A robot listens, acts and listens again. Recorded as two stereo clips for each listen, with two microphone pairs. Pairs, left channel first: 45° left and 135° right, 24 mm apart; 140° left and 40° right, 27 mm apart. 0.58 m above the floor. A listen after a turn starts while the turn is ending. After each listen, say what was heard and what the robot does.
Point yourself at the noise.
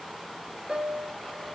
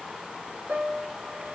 The piano: 85° right. Turn 85° right.
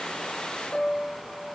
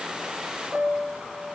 Facing the piano.